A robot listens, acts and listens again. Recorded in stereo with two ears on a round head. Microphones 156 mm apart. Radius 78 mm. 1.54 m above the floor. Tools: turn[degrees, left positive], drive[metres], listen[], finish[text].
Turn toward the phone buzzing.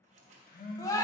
Thought: The phone buzzing: about 50° left or 130° left.
Action: turn[50]
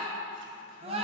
Action: listen[]
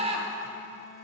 Action: listen[]
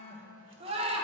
Thought: So it is at 65° left.
Action: turn[65]
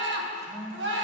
Action: finish[Facing the phone buzzing.]